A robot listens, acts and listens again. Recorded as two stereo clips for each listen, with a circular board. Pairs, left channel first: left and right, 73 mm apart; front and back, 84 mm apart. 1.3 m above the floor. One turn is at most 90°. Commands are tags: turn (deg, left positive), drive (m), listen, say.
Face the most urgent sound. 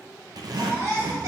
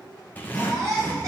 <turn deg="-90"/>
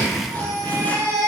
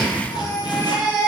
<turn deg="-40"/>
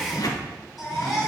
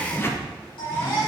<say>Facing the baby crying.</say>